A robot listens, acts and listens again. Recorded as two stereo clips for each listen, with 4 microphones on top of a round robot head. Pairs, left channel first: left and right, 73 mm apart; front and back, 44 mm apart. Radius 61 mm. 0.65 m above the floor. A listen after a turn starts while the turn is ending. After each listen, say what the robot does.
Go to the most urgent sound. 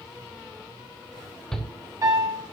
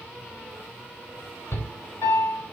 Turn 10° left.
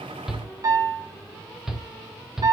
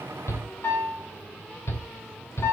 Drive 1.0 m forward.
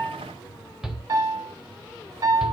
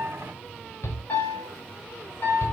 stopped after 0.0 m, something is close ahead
Blocked. The shout is further on, straight ahead.